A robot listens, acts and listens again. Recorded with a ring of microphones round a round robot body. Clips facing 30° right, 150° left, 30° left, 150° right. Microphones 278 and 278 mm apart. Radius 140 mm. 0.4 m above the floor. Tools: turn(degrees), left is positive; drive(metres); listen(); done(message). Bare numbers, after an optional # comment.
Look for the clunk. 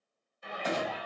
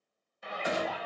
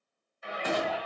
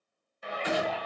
# The clunk: 70° left.
turn(70)
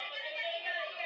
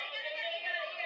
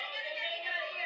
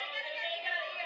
done("I heard a clunk from this way, but can't make it out now.")